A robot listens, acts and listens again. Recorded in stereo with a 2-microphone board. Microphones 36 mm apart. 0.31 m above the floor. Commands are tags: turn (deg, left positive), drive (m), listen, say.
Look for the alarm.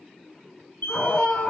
<turn deg="65"/>
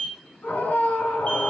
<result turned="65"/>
<turn deg="45"/>
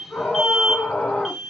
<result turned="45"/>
<say>Found it: an alarm, straight ahead, 1 to 2 m away.</say>